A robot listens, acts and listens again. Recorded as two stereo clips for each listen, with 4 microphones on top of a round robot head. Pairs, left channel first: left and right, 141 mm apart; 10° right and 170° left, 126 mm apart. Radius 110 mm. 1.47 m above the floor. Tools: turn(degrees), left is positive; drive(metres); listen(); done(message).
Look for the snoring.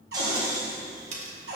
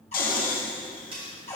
turn(degrees=-20)
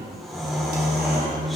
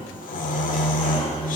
done("Facing the snoring.")